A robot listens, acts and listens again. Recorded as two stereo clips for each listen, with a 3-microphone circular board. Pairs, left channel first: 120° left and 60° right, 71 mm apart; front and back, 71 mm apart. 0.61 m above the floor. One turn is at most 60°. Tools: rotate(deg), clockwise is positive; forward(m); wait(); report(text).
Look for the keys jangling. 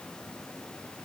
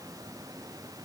wait()
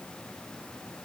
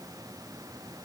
wait()
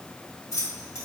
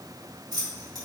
rotate(-60)
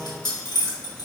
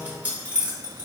rotate(-60)
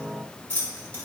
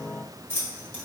rotate(-55)
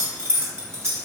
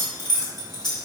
rotate(10)
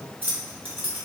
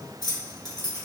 report("Found it: keys jangling, straight ahead.")